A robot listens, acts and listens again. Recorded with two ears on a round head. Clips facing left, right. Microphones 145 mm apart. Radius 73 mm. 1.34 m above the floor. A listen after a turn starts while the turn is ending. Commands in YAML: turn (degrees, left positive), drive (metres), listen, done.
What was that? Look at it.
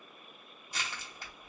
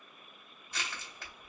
turn: 30
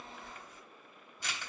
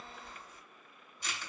turn: 135
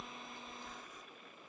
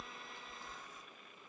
turn: -10
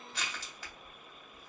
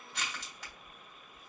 done: "Found it: crushing, straight ahead, 2 to 4 m away."